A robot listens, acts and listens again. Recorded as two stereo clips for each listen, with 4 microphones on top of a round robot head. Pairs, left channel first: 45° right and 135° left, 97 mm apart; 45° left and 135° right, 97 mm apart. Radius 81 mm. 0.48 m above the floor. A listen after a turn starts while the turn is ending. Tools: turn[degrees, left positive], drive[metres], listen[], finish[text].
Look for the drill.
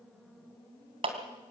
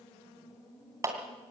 Action: listen[]
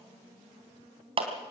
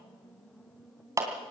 Action: listen[]
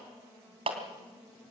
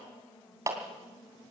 Action: finish[I can't make out a drill, only a clap.]